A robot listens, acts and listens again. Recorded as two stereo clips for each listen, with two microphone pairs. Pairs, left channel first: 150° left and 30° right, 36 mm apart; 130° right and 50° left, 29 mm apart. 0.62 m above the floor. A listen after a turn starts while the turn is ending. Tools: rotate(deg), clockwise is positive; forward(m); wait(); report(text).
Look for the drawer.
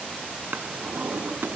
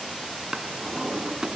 rotate(10)
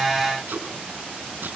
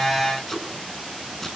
wait()
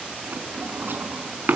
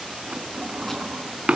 report("Facing the drawer, 2 to 4 m away.")